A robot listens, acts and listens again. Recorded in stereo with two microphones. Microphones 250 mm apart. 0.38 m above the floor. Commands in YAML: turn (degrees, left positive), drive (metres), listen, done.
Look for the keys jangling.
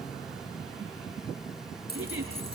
turn: 40
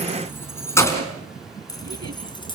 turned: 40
turn: 20
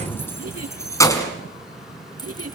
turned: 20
turn: 15
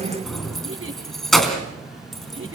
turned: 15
done: "Found it: keys jangling, straight ahead."